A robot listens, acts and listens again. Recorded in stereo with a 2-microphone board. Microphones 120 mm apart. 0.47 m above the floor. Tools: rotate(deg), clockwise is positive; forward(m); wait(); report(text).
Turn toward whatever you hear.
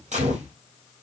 rotate(90)
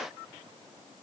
report("Facing where the gunshot came from. I can't hear it now.")